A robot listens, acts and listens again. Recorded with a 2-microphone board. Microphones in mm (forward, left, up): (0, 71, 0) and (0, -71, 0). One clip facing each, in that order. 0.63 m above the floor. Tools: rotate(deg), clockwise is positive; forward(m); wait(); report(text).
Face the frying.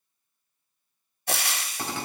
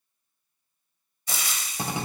rotate(-65)
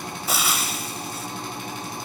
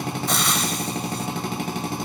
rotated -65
report("Facing the frying, under 1 m away.")